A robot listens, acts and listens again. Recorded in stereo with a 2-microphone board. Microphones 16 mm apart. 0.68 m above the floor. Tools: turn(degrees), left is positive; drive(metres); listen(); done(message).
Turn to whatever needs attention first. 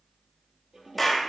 listen()
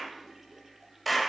listen()
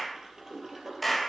done("I can't make out anything urgent, only a clap and a toilet flushing.")